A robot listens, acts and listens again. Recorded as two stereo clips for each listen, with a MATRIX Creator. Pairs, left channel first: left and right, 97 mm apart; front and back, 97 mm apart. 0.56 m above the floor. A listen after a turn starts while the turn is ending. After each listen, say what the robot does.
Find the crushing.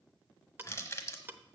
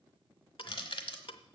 Turn 30° left.
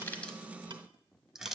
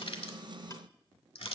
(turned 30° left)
Facing the crushing, 1 to 2 m away.